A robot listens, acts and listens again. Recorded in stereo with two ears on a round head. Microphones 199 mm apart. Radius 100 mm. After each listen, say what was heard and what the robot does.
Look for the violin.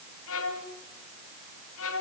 The violin: about 65° left or 115° left. Turn 65° left.
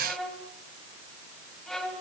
Found it: a violin, straight ahead, 2 to 4 m away.